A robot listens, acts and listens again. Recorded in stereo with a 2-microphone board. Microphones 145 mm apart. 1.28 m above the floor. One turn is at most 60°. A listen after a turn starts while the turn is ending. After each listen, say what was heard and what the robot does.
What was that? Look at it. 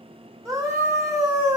The scream: about 20° right or 160° right. Turn 20° right.
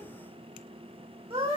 So it is at 140° right. Turn 60° right.
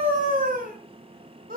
The scream is now 80° right. Turn 60° right.
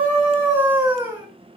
The scream is now 15° right. Turn 15° right.
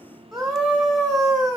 Found it: a scream, straight ahead.